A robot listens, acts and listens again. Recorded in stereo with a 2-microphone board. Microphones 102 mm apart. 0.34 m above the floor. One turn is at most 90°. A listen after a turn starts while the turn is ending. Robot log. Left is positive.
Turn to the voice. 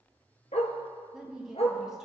cmd yaw -30
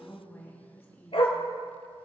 note: So it is at 25° left.
cmd yaw +25
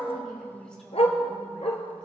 note: The woman speaking is now 10° left.
cmd yaw +10
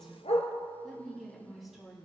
end: Facing the woman speaking, 2 to 4 m away.